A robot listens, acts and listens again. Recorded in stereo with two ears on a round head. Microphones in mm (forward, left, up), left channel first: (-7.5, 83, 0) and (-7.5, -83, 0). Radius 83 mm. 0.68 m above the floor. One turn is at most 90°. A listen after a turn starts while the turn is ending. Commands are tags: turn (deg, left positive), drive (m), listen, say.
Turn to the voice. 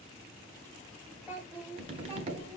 <turn deg="-30"/>
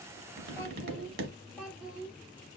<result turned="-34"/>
<turn deg="-30"/>
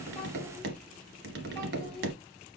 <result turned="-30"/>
<listen/>
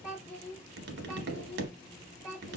<turn deg="30"/>
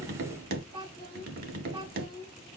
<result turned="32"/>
<turn deg="-30"/>
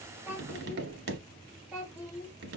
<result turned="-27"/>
<say>Facing the child speaking, 1 to 2 m away.</say>